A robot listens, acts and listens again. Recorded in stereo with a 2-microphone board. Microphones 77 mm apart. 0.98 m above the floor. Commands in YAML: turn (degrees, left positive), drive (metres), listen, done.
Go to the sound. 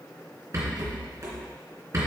turn: -40
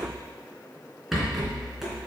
drive: 1.0
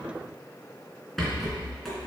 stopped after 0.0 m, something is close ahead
done: "Blocked. The rattle is further on, straight ahead."